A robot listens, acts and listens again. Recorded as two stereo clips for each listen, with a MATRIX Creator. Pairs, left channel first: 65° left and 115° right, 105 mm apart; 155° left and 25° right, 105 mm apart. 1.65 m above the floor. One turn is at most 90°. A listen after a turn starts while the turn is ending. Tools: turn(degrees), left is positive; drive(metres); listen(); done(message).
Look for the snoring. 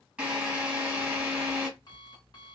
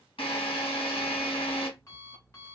listen()
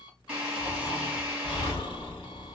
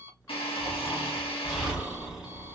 turn(degrees=65)
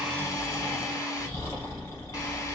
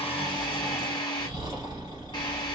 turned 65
turn(degrees=15)
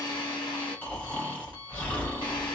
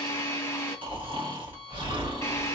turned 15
done("Found it: snoring, straight ahead.")